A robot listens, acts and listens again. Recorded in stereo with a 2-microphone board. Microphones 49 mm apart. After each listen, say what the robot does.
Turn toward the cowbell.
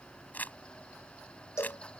Turn 70° left.
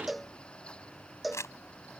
Facing the cowbell.